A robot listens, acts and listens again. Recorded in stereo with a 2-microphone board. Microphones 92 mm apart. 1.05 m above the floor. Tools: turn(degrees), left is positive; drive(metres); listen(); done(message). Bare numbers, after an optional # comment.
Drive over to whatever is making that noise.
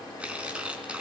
turn(-30)
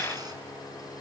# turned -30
listen()
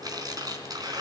# So it is at 135° right.
turn(-135)
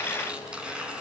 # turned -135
# The tearing paper is now 10° right.
turn(-10)
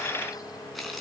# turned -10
drive(1.0)
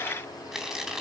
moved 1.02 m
drive(1.0)
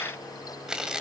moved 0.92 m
drive(1.0)
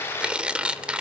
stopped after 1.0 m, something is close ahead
# The tearing paper is now 10° right.
turn(-10)
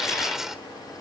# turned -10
done("I am next to the tearing paper.")